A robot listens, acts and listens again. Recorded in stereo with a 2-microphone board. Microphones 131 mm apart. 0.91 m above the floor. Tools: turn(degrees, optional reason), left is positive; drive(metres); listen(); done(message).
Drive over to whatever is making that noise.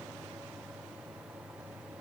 listen()
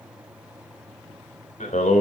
turn(degrees=70, reason="The singing: about 70° left or 110° left.")
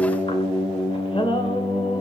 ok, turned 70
turn(degrees=40, reason="So it is at 40° left.")
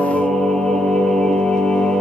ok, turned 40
drive(metres=1.0)
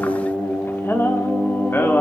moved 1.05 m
turn(degrees=15, reason="The singing is now 15° left.")
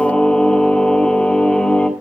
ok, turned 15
drive(metres=1.0)
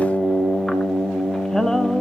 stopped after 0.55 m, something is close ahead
done("Arrived at the singing, straight ahead.")